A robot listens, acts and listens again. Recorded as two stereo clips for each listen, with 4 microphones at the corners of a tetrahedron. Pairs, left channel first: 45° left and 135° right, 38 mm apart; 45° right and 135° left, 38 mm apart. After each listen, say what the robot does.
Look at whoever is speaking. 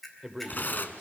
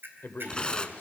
Turn 45° right.
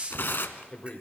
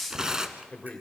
Found it: a man speaking, straight ahead.